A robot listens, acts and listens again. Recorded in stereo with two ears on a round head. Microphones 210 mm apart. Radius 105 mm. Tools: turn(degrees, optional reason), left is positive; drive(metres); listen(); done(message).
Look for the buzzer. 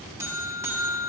turn(degrees=-30)
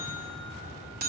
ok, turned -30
turn(degrees=-140, reason="So it is at 140° right.")
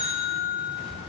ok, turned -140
turn(degrees=-30, reason="The buzzer is now 30° right.")
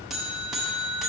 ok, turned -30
done("Facing the buzzer.")